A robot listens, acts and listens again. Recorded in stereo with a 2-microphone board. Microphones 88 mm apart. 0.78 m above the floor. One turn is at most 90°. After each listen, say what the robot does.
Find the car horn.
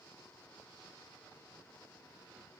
Keep listening.
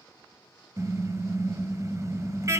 Turn 35° right.
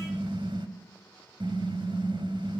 Turn 90° right.
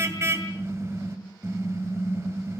Turn 30° right.
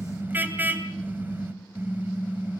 Turn 20° right.
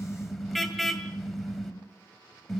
Found it: a car horn, straight ahead.